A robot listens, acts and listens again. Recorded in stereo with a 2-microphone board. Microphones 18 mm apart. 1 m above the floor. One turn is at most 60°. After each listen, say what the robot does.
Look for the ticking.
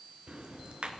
Turn 60° right.
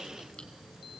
Turn 20° right.
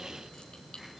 Found it: ticking, straight ahead, 2 to 4 m away.